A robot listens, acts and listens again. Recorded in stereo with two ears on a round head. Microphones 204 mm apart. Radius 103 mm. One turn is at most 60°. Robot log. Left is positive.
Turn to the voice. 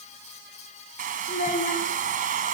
note: The child speaking: about 35° left or 145° left.
cmd yaw +35
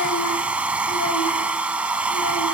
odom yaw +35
cmd idle
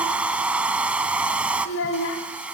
note: So it is at 110° left.
cmd yaw +60
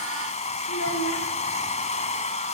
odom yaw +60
note: The child speaking is now 70° left.
cmd yaw +60
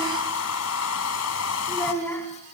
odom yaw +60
note: The child speaking is now 10° left.
cmd yaw +10
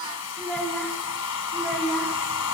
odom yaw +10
end: Found it: a child speaking, straight ahead.